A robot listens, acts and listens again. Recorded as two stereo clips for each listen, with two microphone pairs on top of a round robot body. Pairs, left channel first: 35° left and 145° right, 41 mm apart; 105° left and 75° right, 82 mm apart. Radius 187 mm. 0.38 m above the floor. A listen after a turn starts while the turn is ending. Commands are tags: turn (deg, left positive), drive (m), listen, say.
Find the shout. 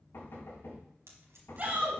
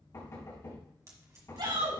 <turn deg="-95"/>
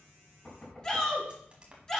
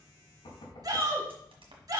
<turn deg="-35"/>
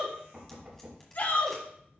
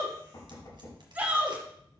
<say>Facing the shout.</say>